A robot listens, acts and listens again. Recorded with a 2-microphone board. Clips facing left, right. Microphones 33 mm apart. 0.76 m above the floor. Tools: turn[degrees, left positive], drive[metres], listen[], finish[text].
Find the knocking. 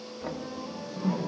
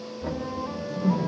Thought: The knocking: about 20° left or 160° left.
Action: turn[20]
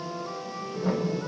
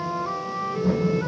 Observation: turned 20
Action: listen[]
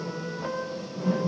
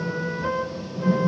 Action: listen[]
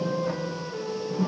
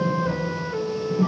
Action: finish[I heard knocking, but can't make it out now. It was about straight ahead or 140° left.]